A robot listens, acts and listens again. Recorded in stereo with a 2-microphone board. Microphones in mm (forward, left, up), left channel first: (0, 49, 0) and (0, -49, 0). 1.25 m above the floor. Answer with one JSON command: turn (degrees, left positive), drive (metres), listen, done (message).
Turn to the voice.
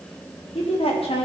{"turn": 90}
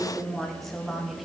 {"done": "Found it: a woman speaking, straight ahead, 2 to 4 m away."}